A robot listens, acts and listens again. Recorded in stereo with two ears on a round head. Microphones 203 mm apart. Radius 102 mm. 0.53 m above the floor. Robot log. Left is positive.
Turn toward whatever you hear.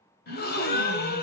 note: The gasp: about 40° left or 140° left.
cmd yaw +40
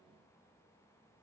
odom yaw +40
cmd idle
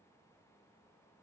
end: I heard a gasp, but can't make it out now. It was about straight ahead or 100° left.